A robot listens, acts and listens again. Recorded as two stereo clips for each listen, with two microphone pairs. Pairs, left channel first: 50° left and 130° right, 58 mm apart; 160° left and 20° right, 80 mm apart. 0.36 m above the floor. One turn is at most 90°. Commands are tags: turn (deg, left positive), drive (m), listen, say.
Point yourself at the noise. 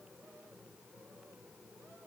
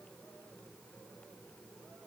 <listen/>
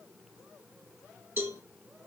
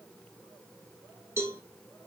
<turn deg="-80"/>
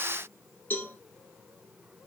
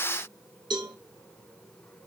<say>Facing the cowbell, 1 to 2 m away.</say>